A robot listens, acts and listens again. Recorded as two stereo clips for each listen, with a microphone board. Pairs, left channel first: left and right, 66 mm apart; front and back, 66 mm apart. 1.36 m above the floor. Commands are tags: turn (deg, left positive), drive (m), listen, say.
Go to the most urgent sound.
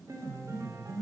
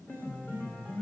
<listen/>
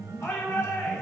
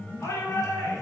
<turn deg="40"/>
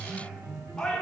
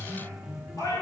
<drive m="1.0"/>
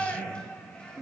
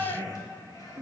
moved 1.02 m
<turn deg="15"/>
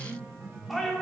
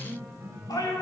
<drive m="1.0"/>
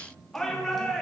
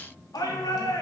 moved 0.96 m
<drive m="1.0"/>
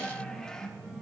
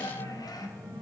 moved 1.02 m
<turn deg="10"/>
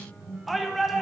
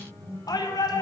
<drive m="1.0"/>
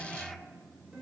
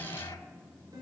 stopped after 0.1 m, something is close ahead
<listen/>
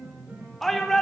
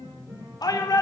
<say>Arrived at the shout, straight ahead.</say>